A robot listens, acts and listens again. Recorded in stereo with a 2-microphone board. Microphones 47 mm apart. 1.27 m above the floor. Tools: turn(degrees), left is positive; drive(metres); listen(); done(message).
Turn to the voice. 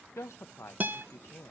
turn(degrees=70)
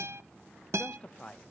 turn(degrees=30)
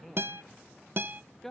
turn(degrees=10)
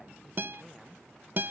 listen()
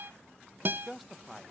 done("Found it: a man speaking, straight ahead.")